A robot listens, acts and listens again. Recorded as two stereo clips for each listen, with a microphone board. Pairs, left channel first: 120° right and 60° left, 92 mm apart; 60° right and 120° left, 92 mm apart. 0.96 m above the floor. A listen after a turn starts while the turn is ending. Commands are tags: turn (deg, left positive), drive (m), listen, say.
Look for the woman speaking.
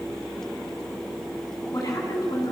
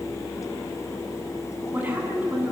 <turn deg="-165"/>
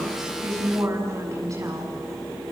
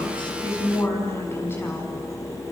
<say>Facing the woman speaking.</say>